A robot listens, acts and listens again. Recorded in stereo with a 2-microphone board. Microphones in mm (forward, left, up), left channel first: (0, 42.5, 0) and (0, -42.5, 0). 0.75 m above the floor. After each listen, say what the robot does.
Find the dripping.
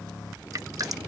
Turn 45° right.
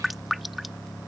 Found it: dripping, straight ahead.